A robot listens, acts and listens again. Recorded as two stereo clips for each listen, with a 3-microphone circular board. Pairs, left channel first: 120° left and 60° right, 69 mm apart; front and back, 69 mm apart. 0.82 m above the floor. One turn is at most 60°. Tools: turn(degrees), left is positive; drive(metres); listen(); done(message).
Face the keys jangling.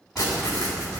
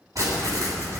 turn(degrees=-60)
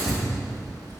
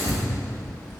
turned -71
turn(degrees=-60)
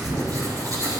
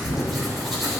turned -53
turn(degrees=-30)
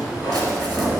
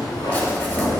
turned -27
done("Facing the keys jangling.")